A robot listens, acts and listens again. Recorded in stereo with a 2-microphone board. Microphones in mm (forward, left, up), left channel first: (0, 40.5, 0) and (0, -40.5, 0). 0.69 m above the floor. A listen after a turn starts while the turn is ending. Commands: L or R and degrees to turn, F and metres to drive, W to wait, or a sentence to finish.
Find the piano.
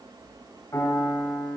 L35
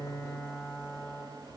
Facing the piano, 2 to 4 m away.